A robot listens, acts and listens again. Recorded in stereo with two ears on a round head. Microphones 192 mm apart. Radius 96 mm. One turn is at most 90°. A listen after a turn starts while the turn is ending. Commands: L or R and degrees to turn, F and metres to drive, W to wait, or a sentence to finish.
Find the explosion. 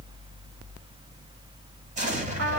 R35
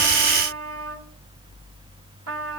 W
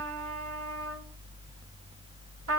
I heard an explosion, but can't make it out now. It was about straight ahead or 110° right.